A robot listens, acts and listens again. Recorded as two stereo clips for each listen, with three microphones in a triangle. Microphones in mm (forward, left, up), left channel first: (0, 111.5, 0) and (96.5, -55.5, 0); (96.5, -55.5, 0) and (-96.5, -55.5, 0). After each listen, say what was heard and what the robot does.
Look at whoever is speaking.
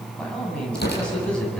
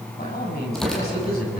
The man speaking: 35° left. Turn 35° left.
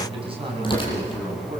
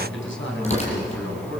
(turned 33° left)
Found it: a man speaking, straight ahead, over 4 m away.